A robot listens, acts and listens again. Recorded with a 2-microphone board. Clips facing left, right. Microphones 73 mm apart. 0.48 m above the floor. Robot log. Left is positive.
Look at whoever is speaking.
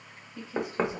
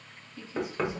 note: The woman speaking: about 55° left or 125° left.
cmd yaw +55
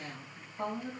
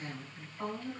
note: So it is at 50° left.
cmd yaw +50
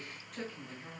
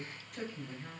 end: Facing the woman speaking.